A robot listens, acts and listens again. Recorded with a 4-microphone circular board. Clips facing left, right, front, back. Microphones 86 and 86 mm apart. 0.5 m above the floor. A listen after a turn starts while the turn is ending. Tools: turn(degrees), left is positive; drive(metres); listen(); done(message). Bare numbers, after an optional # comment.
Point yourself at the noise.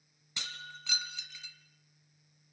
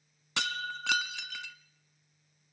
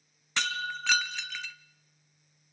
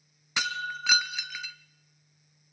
# The breaking glass: 100° right.
turn(-100)
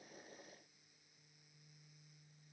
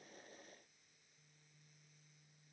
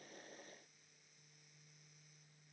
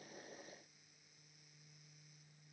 done("Facing where the breaking glass came from. I can't hear it now.")